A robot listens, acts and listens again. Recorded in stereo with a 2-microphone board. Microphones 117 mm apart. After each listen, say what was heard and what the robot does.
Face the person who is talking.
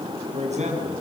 Turn 90° right.
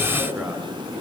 So it is at 10° right. Turn 10° right.
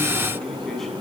Keep listening.
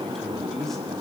Found it: a man speaking, straight ahead, over 4 m away.